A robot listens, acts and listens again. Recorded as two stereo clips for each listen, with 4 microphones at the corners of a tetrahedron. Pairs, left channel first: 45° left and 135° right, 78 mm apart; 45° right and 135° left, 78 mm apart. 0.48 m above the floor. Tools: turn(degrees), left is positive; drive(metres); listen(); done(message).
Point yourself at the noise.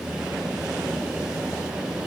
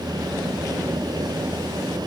listen()
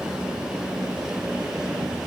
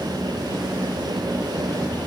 listen()
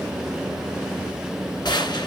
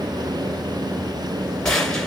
turn(degrees=35)
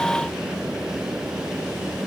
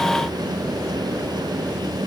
done("I heard a gunshot from this way, but can't make it out now.")